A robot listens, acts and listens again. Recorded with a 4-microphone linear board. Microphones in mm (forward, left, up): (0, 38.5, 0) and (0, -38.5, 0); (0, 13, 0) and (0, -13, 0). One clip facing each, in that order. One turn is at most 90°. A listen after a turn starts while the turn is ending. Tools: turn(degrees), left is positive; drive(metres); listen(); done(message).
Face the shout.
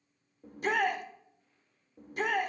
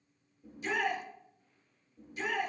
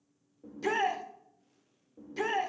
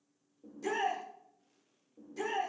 turn(degrees=55)
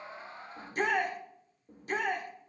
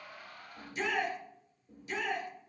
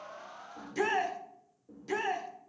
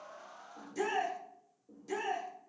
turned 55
turn(degrees=55)
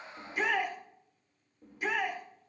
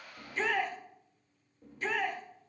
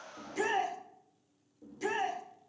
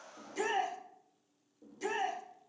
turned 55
turn(degrees=10)
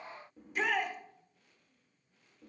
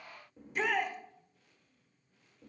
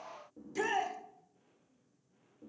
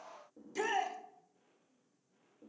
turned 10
done("Facing the shout.")